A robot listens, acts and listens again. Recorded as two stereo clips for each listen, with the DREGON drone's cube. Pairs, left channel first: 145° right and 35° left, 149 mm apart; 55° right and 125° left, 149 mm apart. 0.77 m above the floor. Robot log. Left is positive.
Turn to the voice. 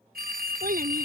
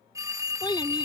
note: The child speaking: 10° left.
cmd yaw +10
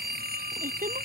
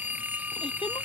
cmd idle
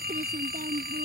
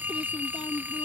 end: Facing the child speaking.